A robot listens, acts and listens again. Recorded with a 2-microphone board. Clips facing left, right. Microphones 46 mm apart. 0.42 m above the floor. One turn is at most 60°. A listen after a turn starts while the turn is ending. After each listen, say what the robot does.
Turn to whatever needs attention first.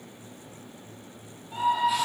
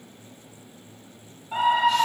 Turn 60° right.
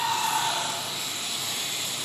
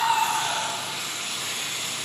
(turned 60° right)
Turn 15° right.
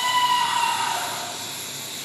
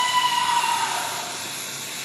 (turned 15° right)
Found it: a scream, straight ahead.